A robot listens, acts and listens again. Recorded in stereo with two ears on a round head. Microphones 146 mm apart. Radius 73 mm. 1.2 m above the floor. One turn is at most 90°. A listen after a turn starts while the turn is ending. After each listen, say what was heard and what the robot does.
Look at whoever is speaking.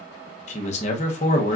The man speaking: about 45° left or 135° left. Turn 45° left.
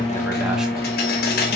Keep listening.
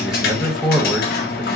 Facing the man speaking.